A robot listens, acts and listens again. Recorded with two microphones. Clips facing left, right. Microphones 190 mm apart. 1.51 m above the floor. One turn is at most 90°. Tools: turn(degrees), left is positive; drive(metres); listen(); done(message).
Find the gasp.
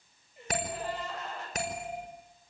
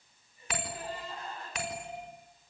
turn(degrees=90)
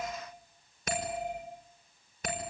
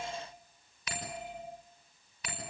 done("I heard a gasp from this way, but can't make it out now.")